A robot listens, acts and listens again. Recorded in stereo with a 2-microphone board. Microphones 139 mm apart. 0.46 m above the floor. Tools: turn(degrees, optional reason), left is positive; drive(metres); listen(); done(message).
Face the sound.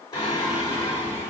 turn(degrees=20, reason="The singing: about 20° left or 160° left.")
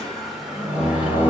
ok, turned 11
turn(degrees=-30)
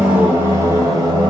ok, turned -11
turn(degrees=-30, reason="The singing: about 30° right or 150° right.")
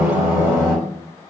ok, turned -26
turn(degrees=-30, reason="The singing: about 30° right or 150° right.")
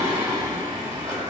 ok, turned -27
turn(degrees=-25, reason="The singing: about 25° right or 155° right.")
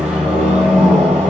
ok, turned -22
done("Found it: singing, straight ahead.")